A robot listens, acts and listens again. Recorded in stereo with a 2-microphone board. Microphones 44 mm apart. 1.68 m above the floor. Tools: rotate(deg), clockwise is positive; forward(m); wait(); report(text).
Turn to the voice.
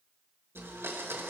wait()
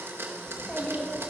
rotate(-25)
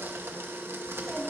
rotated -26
report("Facing the child speaking.")